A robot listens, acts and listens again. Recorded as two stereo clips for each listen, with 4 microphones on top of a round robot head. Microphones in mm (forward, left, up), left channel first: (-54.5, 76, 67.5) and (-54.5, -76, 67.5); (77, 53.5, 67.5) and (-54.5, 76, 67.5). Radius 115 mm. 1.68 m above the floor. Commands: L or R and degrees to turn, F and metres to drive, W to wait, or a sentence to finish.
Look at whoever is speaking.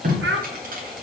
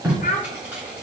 R65
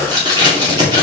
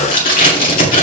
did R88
L25
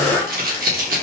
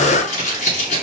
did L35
R10
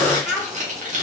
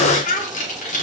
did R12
Found it: a child speaking, straight ahead, 1 to 2 m away.